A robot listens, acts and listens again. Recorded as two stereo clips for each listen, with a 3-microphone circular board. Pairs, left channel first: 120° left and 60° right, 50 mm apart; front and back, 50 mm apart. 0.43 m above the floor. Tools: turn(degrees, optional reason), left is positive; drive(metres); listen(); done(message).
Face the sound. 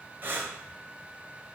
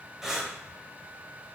turn(degrees=-100, reason="The breathing: 100° right.")
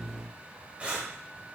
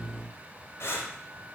done("Facing the breathing.")